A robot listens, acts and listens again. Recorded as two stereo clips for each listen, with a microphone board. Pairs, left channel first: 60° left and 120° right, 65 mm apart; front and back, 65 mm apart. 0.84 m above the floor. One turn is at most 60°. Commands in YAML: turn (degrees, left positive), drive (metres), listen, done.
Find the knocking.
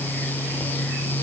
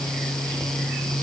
listen: true
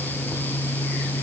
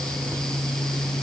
listen: true
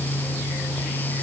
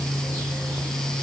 done: "I can't make out knocking."